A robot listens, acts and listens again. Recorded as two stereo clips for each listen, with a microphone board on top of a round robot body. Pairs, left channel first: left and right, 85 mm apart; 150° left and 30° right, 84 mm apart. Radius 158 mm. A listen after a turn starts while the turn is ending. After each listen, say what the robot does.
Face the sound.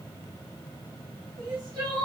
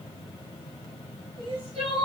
Turn 40° right.
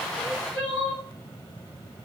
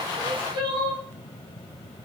Turn 10° left.
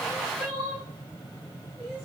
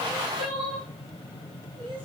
Facing the crying.